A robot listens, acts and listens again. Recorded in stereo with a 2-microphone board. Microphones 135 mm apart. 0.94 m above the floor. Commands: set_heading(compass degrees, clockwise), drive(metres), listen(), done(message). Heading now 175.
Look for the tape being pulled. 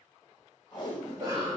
set_heading(140)
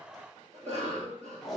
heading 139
done("Found it: tape being pulled, straight ahead.")